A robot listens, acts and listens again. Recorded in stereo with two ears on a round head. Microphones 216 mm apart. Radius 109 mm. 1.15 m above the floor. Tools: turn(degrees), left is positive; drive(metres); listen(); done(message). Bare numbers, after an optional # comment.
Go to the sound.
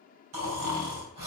# The snoring: about 75° right or 105° right.
turn(-75)
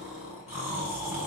# So it is at 10° right.
turn(-10)
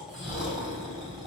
drive(1.0)
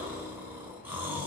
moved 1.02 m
# The snoring is now 10° right.
turn(-10)
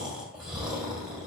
drive(1.0)
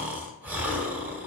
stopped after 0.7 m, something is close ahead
# The snoring is now 10° right.
turn(-10)
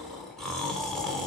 done("Arrived at the snoring, straight ahead.")